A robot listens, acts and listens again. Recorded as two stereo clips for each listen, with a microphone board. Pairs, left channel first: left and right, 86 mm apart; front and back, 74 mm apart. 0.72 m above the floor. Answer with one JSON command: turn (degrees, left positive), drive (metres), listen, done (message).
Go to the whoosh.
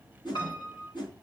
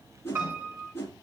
{"turn": 60}
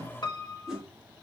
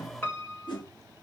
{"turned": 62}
{"drive": 1.0}
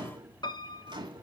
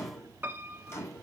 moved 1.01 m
{"listen": true}
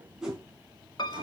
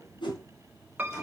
{"drive": 1.0}
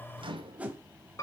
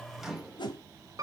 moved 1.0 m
{"turn": -15}
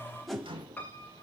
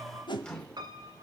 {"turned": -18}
{"drive": 1.0}
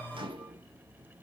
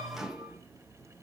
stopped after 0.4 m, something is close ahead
{"listen": true}
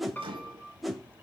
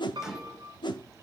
{"done": "Arrived at the whoosh, straight ahead."}